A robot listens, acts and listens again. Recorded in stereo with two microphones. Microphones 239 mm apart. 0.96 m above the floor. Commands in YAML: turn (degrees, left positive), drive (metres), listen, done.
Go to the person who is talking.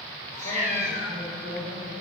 turn: 90
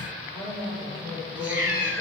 turn: -15
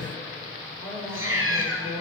drive: 1.0
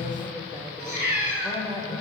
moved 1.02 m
drive: 1.0
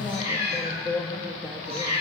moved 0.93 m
drive: 1.0
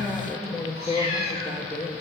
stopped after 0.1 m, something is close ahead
done: "Arrived at the woman speaking, straight ahead."